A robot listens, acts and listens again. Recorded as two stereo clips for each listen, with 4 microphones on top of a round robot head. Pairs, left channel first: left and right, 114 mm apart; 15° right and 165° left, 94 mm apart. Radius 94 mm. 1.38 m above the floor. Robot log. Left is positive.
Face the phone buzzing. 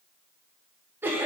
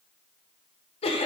cmd idle
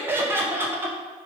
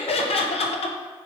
cmd idle
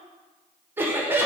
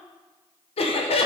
end: I can't make out a phone buzzing to turn to.